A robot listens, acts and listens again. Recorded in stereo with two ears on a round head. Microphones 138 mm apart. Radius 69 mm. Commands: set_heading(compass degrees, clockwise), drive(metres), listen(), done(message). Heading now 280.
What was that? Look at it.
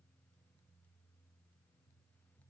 listen()
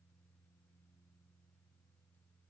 listen()
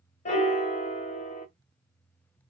set_heading(235)
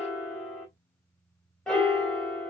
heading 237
done("Found it: a piano, straight ahead.")